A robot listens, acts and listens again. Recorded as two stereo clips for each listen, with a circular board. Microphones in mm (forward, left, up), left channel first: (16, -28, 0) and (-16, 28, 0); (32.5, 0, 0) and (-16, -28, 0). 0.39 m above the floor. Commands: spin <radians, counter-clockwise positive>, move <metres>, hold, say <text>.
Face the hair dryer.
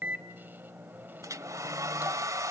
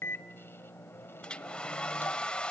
spin 1.75
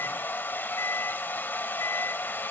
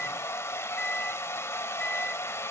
say Found it: a hair dryer, straight ahead.